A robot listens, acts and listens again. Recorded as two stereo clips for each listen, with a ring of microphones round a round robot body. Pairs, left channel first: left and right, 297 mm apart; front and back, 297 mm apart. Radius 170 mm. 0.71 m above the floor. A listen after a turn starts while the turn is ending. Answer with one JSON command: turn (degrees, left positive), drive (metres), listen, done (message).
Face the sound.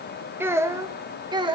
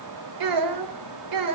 {"turn": -165}
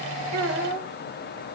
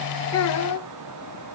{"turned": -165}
{"turn": -30}
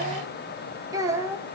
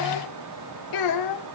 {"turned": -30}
{"done": "Facing the child speaking."}